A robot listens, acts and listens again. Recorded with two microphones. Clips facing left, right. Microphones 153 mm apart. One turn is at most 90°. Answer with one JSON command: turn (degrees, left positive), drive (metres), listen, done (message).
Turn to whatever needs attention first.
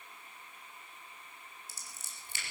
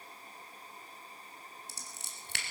{"listen": true}
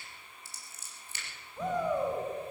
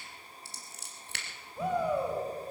{"turn": -30}
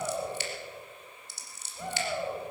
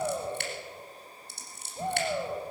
{"turn": -90}
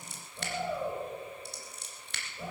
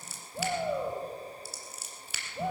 {"turn": -80}
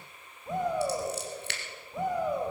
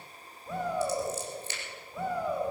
{"turn": 20}
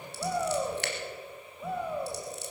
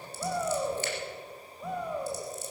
{"done": "Facing the shout."}